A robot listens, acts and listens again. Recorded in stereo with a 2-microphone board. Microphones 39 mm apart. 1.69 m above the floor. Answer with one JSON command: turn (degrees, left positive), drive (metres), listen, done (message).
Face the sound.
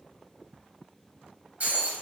{"turn": -45}
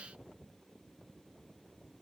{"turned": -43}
{"listen": true}
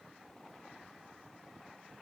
{"done": "I heard breaking glass, but can't make it out now. It was about straight ahead or 95° right."}